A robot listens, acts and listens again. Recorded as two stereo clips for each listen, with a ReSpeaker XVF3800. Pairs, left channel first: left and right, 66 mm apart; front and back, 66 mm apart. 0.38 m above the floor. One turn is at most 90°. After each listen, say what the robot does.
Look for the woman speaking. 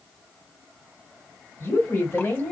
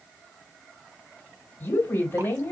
Turn 45° left.
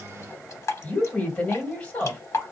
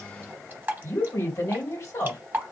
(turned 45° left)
Turn 25° left.
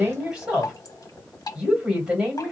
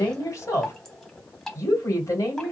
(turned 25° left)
Turn 20° right.
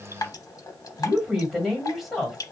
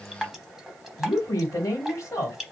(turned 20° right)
Facing the woman speaking, 2 to 4 m away.